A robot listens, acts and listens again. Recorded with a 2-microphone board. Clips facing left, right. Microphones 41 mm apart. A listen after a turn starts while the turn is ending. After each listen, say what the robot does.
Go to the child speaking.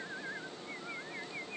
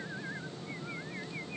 Keep listening.
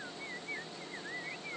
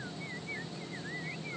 Keep listening.
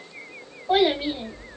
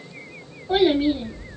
Turn 65° left.
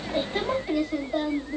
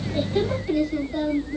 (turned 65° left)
Turn 50° left.
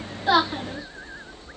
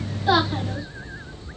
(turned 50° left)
Drive 1.0 m forward.
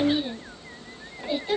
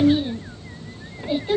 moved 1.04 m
Drive 1.0 m forward.
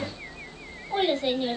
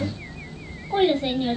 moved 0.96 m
Turn 10° right.
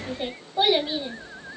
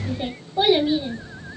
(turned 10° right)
Drive 1.0 m forward.
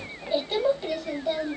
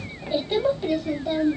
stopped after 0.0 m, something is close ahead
Arrived at the child speaking, straight ahead.